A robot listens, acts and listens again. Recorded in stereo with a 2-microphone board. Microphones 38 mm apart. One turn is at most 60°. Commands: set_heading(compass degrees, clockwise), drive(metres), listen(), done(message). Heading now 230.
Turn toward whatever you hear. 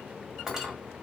set_heading(260)
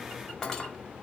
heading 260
set_heading(245)
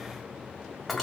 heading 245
done("Facing the cutlery clinking.")